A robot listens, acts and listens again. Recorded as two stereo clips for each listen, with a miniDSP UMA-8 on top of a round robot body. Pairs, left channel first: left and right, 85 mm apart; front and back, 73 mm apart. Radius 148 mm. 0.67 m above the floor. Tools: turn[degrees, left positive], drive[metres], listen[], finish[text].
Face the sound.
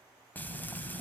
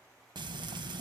Thought: The frying: 160° left.
Action: turn[160]
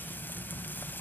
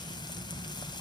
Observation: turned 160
Thought: The frying is now 20° left.
Action: turn[20]
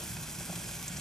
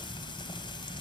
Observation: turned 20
Action: finish[Found it: frying, straight ahead.]